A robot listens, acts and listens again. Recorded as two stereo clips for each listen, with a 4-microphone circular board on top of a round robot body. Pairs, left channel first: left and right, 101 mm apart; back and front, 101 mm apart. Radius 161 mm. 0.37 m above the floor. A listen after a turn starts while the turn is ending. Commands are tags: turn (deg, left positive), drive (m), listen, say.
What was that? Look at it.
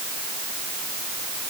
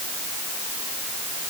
<listen/>
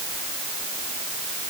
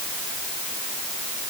<listen/>
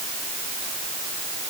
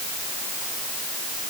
<say>I can't make out anything to turn to.</say>